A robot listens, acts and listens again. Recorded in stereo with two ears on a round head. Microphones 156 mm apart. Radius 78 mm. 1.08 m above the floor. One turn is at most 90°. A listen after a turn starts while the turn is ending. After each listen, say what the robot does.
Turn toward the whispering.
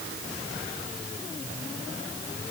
Keep listening.
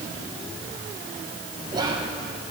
Turn 25° right.
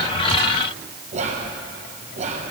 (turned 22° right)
Turn 90° right.
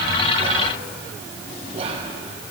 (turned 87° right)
Turn 40° right.
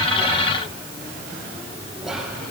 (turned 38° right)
Facing the whispering.